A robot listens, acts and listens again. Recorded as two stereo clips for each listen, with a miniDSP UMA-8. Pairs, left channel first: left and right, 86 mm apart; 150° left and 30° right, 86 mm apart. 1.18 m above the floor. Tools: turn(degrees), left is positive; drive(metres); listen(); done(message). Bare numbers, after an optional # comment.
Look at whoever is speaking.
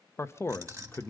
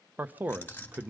# The man speaking: 35° left.
turn(35)
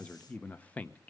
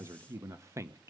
# The man speaking is now 20° left.
turn(20)
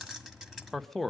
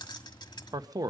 done("Found it: a man speaking, straight ahead, under 1 m away.")